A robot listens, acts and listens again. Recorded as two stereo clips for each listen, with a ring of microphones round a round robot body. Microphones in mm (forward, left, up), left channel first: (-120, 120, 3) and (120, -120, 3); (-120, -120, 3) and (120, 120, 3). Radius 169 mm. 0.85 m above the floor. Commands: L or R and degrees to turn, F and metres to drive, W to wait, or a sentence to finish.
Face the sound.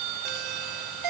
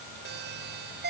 R15
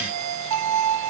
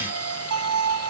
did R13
Facing the doorbell.